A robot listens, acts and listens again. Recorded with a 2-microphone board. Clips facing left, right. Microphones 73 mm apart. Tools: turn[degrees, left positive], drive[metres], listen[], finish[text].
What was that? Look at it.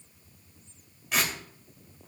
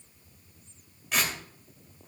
Action: turn[30]
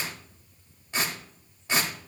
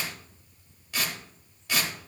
Thought: So it is at 150° left.
Action: turn[150]
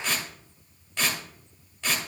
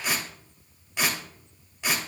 Thought: The tearing paper is now 10° right.
Action: turn[-10]
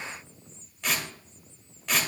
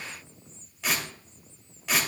Action: finish[Facing the tearing paper, 2 to 4 m away.]